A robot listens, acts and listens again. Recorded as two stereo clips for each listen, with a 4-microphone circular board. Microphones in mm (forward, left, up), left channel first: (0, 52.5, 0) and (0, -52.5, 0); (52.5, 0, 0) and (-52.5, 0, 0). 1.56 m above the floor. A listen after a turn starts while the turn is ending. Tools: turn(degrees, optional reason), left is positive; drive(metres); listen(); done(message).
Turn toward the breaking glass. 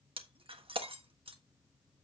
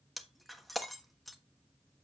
turn(degrees=-90, reason="The breaking glass: 90° right.")
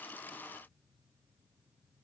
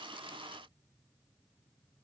done("I heard breaking glass from this way, but can't make it out now.")